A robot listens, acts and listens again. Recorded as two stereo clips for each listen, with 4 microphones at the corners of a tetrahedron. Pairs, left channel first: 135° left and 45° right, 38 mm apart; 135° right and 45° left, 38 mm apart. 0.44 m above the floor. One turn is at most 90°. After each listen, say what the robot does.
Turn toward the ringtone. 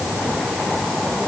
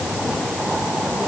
Keep listening.
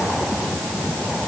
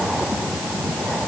Keep listening.
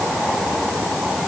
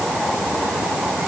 I can't make out a ringtone to turn to.